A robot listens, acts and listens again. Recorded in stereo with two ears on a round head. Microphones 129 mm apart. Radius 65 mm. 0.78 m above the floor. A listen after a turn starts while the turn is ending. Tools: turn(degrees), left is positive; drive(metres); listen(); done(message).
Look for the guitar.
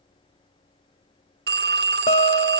turn(degrees=45)
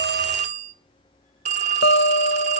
turn(degrees=90)
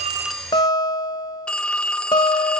turn(degrees=25)
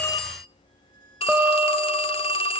done("Found it: a guitar, straight ahead.")